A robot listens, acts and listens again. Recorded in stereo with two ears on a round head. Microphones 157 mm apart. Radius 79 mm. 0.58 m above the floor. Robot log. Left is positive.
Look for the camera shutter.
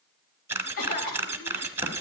cmd yaw -30
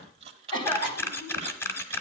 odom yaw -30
note: So it is at 15° left.
cmd yaw +15
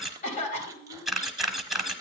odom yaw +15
end: Found it: a camera shutter, straight ahead.